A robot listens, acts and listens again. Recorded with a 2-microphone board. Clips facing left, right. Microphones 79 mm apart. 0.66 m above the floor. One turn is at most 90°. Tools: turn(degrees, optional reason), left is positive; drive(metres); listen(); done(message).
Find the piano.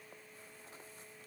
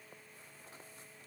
listen()
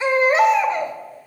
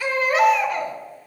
listen()
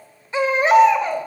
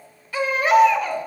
done("I can't make out a piano, only a baby crying.")